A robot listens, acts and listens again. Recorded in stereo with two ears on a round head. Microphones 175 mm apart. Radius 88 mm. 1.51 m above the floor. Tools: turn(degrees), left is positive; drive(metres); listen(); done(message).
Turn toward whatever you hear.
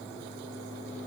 listen()
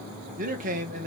turn(degrees=-45)
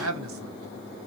turn(degrees=-90)
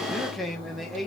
done("Found it: a man speaking, straight ahead, 1 to 2 m away.")